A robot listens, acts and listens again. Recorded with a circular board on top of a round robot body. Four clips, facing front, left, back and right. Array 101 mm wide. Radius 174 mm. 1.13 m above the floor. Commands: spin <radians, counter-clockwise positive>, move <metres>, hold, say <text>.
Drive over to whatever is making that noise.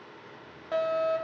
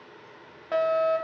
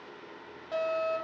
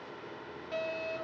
spin 1.31
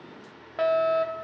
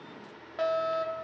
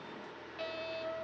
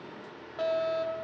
spin 0.17
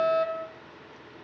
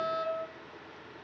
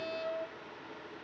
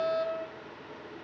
move 1.0
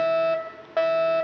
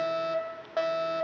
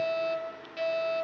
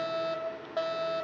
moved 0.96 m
spin 0.17
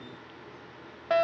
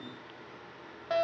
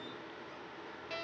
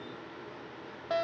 move 1.0
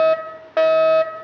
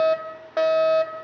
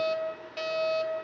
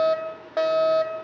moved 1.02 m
move 1.0
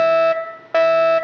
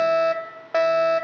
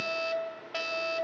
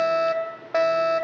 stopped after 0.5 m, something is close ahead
say I am next to the fire alarm.